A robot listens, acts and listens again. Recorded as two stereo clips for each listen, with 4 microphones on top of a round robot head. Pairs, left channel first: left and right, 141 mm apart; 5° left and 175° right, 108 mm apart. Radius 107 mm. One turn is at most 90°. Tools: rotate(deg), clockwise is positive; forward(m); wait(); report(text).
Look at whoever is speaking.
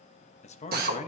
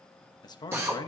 rotate(-55)
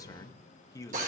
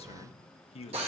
rotate(-25)
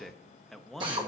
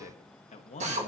report("Found it: a man speaking, straight ahead.")